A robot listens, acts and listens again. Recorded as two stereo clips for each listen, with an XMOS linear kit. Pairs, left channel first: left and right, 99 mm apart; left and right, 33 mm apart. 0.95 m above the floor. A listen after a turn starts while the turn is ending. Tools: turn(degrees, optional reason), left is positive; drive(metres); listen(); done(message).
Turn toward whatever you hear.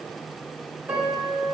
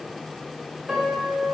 turn(degrees=-20, reason="The piano: about 20° right or 160° right.")
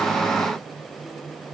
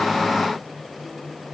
listen()
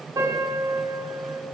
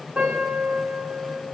turn(degrees=-140, reason="So it is at 140° right.")
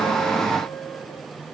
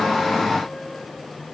listen()
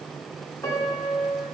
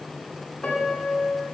turn(degrees=30, reason="The piano is now 30° left.")
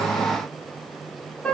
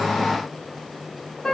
turn(degrees=10, reason="The piano is now 10° left.")
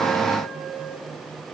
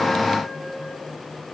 listen()
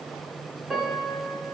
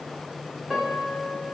done("Found it: a piano, straight ahead.")